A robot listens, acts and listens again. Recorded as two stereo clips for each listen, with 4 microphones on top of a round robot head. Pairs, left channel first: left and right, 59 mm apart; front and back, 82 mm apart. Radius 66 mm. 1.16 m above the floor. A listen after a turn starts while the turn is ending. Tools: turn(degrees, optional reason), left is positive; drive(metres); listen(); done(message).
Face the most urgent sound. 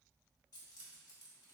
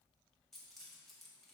listen()
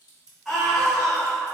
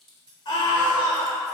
done("Facing the scream, 1 to 2 m away.")